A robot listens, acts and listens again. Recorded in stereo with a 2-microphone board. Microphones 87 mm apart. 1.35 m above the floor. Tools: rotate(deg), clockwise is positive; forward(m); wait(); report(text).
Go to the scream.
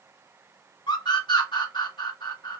rotate(-65)
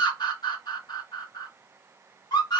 rotate(-55)
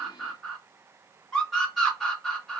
forward(1.0)
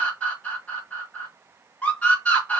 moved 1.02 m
rotate(-15)
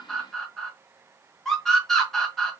forward(1.0)
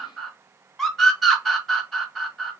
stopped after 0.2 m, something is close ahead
report("I am next to the scream.")